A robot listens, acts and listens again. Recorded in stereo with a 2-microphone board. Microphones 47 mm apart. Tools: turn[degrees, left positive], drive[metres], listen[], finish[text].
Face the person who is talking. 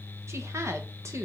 Thought: The woman speaking: about 65° right or 115° right.
Action: turn[-65]
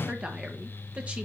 Thought: So it is at 25° right.
Action: turn[-25]
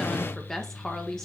Thought: The woman speaking is now 10° left.
Action: turn[10]
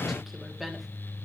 Action: finish[Found it: a woman speaking, straight ahead.]